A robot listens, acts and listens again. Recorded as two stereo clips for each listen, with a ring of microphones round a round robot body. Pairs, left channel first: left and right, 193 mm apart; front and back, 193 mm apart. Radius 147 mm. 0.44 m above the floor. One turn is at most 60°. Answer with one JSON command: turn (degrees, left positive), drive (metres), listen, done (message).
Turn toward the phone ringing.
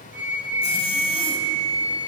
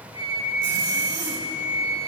{"listen": true}
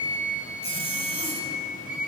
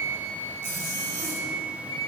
{"listen": true}
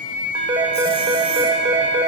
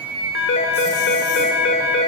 {"turn": -25}
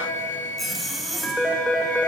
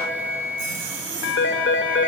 {"done": "Found it: a phone ringing, straight ahead."}